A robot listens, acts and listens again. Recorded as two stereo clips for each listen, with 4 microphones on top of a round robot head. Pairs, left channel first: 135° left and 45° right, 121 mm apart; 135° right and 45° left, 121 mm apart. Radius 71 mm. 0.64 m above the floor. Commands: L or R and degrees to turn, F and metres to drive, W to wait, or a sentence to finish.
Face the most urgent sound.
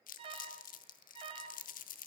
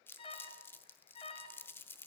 R95
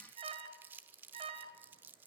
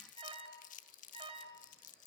Facing the alarm.